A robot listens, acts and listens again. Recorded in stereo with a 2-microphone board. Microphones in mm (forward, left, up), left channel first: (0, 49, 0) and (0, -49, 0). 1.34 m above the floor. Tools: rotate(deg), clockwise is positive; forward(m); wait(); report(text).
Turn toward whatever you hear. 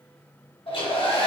rotate(-75)
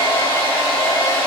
rotate(-25)
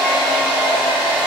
report("Found it: a hair dryer, straight ahead.")